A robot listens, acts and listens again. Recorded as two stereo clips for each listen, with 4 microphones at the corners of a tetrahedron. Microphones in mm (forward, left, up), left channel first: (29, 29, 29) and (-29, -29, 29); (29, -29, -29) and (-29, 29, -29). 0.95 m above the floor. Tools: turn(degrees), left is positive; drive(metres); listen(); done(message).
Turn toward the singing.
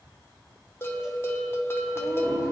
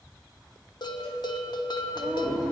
turn(degrees=-175)
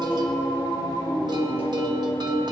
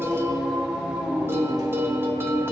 turn(degrees=70)
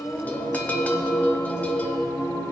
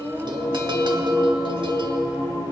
turn(degrees=-10)
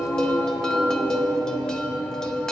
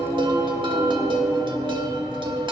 done("Facing the singing.")